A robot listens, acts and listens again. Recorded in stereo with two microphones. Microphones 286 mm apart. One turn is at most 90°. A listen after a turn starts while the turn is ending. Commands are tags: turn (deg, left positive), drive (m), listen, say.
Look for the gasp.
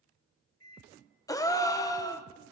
<turn deg="30"/>
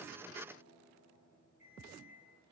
<listen/>
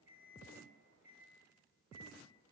<say>I heard a gasp, but can't make it out now. It was about 20° right or 140° left.</say>